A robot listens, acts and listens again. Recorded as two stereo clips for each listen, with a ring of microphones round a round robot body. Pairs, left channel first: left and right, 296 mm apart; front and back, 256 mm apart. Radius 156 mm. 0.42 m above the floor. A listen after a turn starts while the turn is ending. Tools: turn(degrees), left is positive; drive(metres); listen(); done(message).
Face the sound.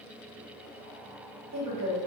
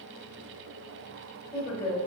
turn(degrees=-60)
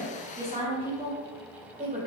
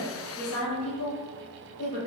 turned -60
turn(degrees=-20)
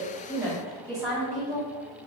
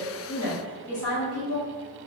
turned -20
done("Facing the woman speaking.")